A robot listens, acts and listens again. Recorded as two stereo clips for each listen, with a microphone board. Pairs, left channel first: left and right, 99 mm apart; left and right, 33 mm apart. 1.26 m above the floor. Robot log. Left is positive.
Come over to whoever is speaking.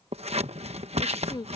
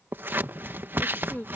note: The woman speaking: about 50° left or 130° left.
cmd yaw +50
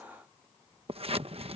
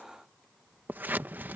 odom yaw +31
cmd idle
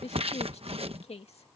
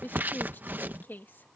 note: So it is at 100° left.
cmd yaw +100
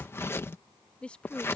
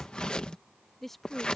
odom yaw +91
note: The woman speaking is now 10° left.
cmd yaw +10
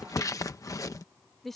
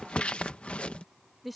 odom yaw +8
cmd fwd 1.0
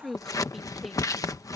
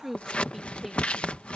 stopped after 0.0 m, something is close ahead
end: Something is in my way. I am facing the woman speaking but have not reached it.